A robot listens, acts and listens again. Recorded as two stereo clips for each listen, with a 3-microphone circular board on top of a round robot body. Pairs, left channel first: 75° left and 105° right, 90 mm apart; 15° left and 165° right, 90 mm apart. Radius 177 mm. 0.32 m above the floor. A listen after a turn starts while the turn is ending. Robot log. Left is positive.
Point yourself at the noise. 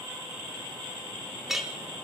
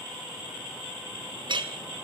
note: The clink: 170° left.
cmd yaw +170
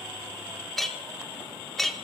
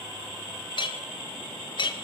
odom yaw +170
note: The clink is now 10° right.
cmd yaw -10
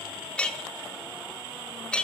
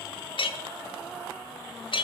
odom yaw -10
end: Found it: a clink, straight ahead, 1 to 2 m away.